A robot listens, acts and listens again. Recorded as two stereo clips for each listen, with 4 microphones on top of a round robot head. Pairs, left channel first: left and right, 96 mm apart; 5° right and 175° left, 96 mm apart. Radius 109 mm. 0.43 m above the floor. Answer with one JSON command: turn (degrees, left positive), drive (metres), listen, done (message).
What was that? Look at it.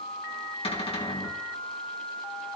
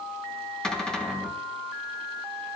{"turn": 80}
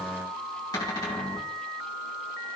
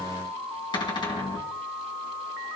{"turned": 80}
{"turn": 35}
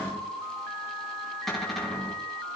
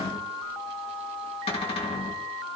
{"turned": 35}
{"done": "Found it: a cupboard door, straight ahead."}